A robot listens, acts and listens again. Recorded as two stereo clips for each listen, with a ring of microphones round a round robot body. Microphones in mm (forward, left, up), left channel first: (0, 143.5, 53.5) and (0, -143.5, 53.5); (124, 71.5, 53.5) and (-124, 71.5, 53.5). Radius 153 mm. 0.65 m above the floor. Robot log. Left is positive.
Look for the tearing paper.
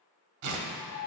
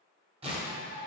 note: The tearing paper: 110° right.
cmd yaw -110
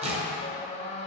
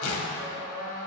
note: The tearing paper is now 20° right.
cmd yaw -20
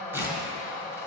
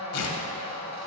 end: Facing the tearing paper, 1 to 2 m away.